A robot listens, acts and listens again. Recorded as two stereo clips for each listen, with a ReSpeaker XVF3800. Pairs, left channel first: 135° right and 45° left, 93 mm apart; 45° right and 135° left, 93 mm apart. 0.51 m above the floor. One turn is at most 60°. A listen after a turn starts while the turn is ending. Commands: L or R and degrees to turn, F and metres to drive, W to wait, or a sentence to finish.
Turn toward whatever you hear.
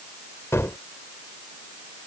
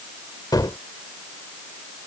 R60
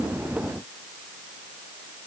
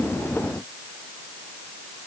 R20
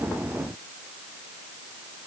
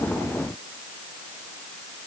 I heard a gunshot from this way, but can't make it out now.